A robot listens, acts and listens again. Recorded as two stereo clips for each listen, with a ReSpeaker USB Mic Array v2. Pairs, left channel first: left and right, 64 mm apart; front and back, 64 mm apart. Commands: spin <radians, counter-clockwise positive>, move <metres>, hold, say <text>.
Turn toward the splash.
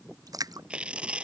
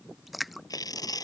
spin -1.57
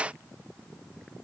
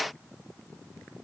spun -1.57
say I heard a splash from this way, but can't make it out now.